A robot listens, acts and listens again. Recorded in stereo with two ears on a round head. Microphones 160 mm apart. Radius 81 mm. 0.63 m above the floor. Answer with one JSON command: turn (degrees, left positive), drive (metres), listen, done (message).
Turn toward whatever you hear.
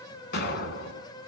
{"turn": 60}
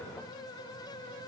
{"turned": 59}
{"listen": true}
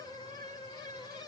{"done": "I heard an explosion, but can't make it out now. It was about straight ahead or 60° left."}